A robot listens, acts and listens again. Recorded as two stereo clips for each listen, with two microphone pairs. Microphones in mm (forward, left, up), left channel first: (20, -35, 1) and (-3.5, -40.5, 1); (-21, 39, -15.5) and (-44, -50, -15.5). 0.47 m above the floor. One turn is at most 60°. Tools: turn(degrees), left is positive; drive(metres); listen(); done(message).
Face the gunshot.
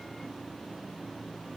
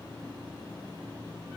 listen()
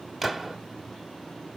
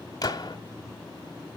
turn(degrees=60)
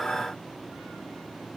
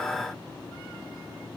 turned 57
turn(degrees=60)
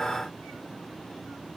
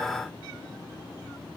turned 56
turn(degrees=10)
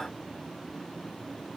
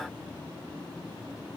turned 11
done("Facing where the gunshot came from. I can't hear it now.")